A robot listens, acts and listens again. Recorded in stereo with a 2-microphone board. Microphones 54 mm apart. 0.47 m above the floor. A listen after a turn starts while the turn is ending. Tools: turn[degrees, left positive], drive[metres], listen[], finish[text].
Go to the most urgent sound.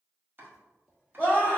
Thought: The scream: about 35° left or 145° left.
Action: turn[35]
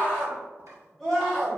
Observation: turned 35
Action: drive[1.0]
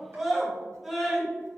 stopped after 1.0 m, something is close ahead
Action: finish[Arrived at the scream, straight ahead.]